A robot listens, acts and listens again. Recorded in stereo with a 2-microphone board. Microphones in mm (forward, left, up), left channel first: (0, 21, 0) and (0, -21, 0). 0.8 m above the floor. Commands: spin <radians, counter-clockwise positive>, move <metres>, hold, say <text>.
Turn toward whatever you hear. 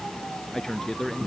spin 0.52
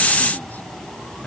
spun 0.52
hold
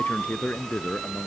spin 2.44
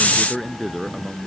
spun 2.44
say Facing the man speaking.